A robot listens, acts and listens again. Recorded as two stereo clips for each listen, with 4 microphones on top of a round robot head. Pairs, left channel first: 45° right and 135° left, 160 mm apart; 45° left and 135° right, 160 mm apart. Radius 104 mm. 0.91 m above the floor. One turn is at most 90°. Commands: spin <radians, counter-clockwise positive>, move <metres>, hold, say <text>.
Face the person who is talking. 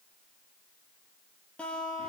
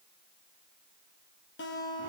hold
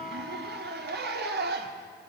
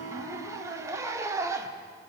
hold
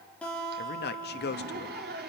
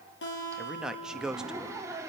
spin -0.79
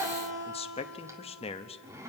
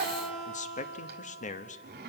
say Found it: a man speaking, straight ahead, 1 to 2 m away.